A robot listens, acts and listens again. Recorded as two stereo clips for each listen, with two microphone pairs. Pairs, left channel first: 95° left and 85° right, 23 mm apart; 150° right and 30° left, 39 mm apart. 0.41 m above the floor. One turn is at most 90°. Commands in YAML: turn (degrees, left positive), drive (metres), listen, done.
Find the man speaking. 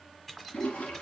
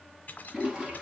listen: true
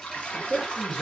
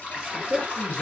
turn: 50
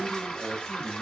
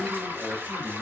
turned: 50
done: "Found it: a man speaking, straight ahead, 2 to 4 m away."